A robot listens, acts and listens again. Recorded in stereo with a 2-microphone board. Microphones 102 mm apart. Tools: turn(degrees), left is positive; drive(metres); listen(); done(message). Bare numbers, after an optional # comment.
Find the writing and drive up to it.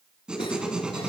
turn(-30)
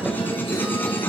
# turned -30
# So it is at 20° left.
turn(20)
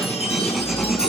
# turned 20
drive(1.0)
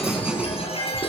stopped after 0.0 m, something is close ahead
# The writing is now 10° right.
turn(-10)
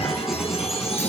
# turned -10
listen()
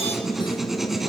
done("Something is in my way. I am facing the writing but have not reached it.")